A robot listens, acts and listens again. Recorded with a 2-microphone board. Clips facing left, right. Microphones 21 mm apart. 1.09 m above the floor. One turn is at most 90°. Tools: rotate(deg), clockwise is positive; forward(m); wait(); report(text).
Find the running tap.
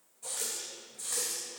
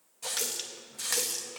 rotate(65)
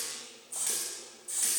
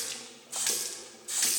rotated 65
rotate(45)
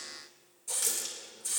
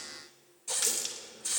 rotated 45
rotate(25)
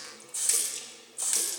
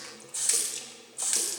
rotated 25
rotate(10)
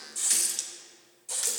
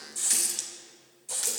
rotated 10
report("Facing the running tap, under 1 m away.")